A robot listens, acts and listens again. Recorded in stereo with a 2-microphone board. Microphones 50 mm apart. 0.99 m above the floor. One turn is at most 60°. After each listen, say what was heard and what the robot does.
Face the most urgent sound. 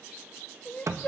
The crying: about 30° left or 150° left. Turn 30° left.
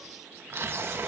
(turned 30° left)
Keep listening.
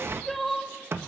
Found it: crying, straight ahead, 1 to 2 m away.